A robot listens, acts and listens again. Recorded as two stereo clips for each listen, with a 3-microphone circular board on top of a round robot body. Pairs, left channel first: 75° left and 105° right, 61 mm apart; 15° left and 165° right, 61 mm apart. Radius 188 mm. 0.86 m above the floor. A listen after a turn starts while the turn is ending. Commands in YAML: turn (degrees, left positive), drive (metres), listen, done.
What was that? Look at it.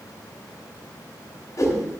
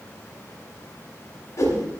turn: 45
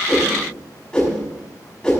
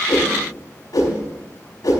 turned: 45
done: "Facing the whoosh, over 4 m away."